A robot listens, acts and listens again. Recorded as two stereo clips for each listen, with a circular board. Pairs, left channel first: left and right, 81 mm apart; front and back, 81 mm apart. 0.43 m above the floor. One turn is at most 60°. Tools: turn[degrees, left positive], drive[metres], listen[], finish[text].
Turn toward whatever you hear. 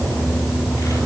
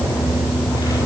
Action: listen[]
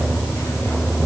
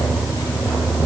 Action: listen[]
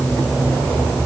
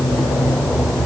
Action: finish[I can't make out anything.]